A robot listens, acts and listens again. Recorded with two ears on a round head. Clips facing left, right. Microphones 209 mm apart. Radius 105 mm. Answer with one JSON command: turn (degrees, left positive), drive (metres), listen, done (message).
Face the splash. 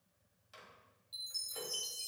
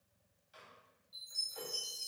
{"listen": true}
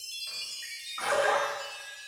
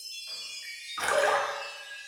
{"turn": -75}
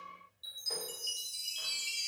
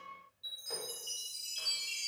{"listen": true}
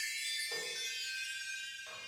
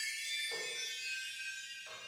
{"done": "I heard a splash, but can't make it out now. It was about straight ahead or 30° right."}